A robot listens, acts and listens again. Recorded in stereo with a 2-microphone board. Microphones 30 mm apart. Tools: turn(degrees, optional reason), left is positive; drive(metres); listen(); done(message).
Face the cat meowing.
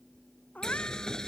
turn(degrees=60, reason="The cat meowing: about 60° left or 120° left.")
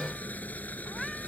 listen()
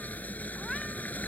listen()
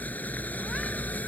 done("I heard a cat meowing, but can't make it out now. It was about straight ahead or 60° left.")